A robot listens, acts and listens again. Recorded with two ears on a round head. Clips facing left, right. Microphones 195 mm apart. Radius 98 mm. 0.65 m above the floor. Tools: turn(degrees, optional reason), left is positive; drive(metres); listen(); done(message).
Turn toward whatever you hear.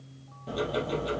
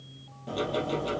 turn(degrees=30)
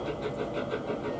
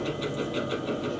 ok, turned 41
turn(degrees=-45, reason="So it is at 45° right.")
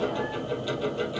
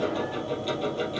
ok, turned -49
done("Found it: ticking, straight ahead, 2 to 4 m away.")